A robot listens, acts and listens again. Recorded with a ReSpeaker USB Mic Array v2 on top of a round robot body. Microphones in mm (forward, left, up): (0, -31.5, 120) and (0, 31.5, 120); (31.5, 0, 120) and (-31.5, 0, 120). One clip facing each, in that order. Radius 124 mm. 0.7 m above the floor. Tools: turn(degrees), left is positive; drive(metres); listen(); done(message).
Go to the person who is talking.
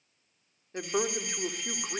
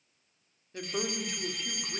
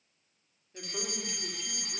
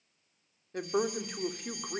turn(degrees=-145)
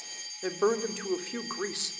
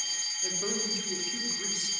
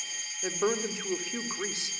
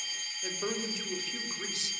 turn(degrees=-55)
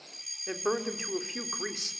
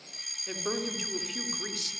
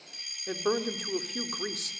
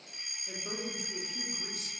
turn(degrees=-25)
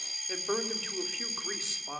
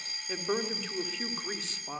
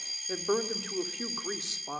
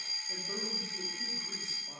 drive(metres=1.0)
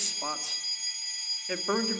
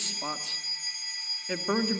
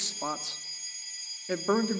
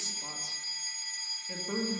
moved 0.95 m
drive(metres=1.0)
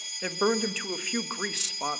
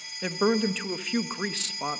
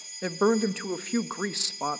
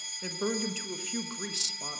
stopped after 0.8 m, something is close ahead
done("Arrived at the woman speaking, straight ahead.")